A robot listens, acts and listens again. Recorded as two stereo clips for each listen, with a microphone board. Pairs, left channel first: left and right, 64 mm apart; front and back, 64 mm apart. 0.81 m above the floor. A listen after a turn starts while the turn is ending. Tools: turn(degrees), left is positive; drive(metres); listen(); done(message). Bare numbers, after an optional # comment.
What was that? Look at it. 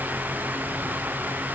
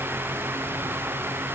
listen()
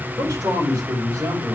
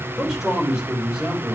# The man speaking: 100° right.
turn(-100)
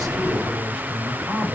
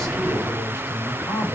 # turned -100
# The man speaking is now 25° right.
turn(-25)
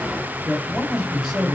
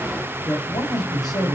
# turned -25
done("Found it: a man speaking, straight ahead, over 4 m away.")